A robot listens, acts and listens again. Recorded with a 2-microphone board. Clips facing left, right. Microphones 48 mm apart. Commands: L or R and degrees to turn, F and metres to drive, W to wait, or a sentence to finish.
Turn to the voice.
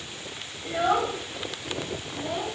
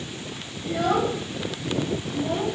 R30
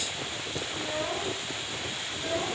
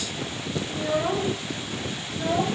R105
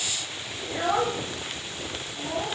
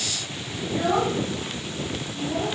L25
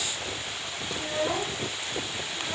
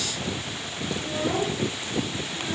L15
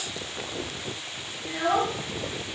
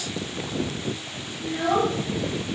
Found it: a child speaking, straight ahead, 2 to 4 m away.